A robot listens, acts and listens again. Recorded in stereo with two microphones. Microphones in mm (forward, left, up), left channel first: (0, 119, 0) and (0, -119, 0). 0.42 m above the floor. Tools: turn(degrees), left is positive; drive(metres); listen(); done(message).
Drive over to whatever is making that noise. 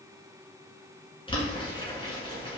turn(degrees=20)
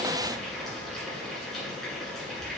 drive(metres=1.0)
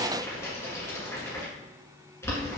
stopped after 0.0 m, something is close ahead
turn(degrees=10)
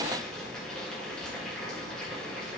done("Blocked. The boiling is further on, straight ahead.")